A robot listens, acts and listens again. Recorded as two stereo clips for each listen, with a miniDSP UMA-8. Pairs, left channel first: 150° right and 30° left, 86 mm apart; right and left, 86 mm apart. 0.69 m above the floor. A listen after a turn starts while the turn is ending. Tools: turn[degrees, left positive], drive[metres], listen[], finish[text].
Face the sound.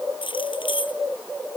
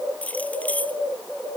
Thought: The keys jangling: 160° right.
Action: turn[-160]
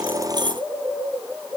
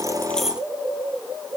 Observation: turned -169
Thought: Nothing new. It was at 10° left.
Action: turn[10]
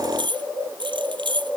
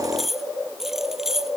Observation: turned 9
Action: finish[Facing the keys jangling.]